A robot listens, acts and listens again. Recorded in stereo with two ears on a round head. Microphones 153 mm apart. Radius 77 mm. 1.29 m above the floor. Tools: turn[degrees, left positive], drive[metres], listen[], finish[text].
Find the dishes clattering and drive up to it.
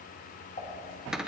Thought: The dishes clattering: about 35° left or 145° left.
Action: turn[35]
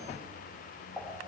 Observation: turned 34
Action: drive[1.0]
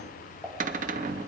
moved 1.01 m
Action: drive[1.0]
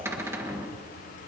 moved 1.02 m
Action: listen[]
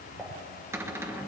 Action: drive[1.0]
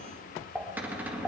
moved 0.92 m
Action: drive[1.0]
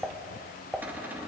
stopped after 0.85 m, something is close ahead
Action: finish[Arrived at the dishes clattering, straight ahead.]